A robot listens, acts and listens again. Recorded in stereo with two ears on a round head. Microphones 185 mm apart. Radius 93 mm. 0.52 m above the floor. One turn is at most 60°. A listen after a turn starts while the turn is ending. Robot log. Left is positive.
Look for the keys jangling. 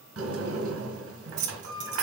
note: The keys jangling: about 40° right or 140° right.
cmd yaw -40
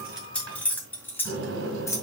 note: So it is at 15° left.
cmd yaw +15
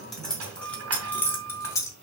note: The keys jangling is now 15° left.
cmd yaw +15
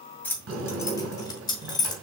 note: The keys jangling is now 20° left.
cmd yaw +20
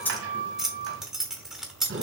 end: Facing the keys jangling, 1 to 2 m away.